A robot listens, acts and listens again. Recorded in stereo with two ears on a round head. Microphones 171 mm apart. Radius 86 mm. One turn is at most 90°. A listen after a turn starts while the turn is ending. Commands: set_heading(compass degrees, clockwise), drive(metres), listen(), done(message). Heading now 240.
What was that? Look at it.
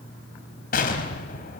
set_heading(190)
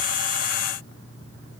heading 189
listen()
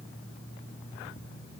done("I heard an explosion, but can't make it out now. It was about 5° right or 80° left.")